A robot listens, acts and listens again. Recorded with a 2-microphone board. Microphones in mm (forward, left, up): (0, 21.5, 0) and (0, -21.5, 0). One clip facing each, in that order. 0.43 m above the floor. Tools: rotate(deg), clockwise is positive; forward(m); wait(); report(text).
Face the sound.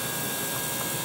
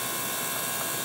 wait()
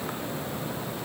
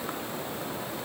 wait()
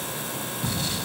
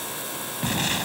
rotate(55)
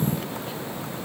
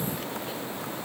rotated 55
wait()
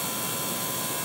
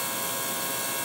report("I heard an explosion, but can't make it out now. It was about straight ahead or 70° right.")